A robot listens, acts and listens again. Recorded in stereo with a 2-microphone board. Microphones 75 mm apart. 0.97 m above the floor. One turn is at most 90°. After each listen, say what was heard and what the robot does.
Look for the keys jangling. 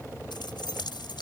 Turn 90° left.
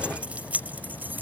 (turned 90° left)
So it is at 25° right. Turn 25° right.
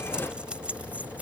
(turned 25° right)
The keys jangling is now 20° right. Turn 20° right.
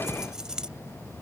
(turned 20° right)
The keys jangling is now 10° right. Turn 10° right.
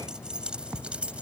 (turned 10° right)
The keys jangling is now 15° right. Turn 15° right.
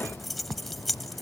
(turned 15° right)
Facing the keys jangling.